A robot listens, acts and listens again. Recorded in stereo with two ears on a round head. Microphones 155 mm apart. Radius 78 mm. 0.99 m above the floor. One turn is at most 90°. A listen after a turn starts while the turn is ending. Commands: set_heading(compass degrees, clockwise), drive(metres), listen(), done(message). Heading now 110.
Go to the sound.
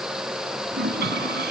set_heading(170)
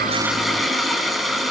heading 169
drive(1.0)
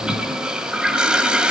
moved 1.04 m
drive(1.0)
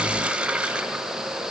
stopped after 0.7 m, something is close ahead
set_heading(179)
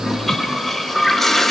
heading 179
done("I am next to the toilet flushing.")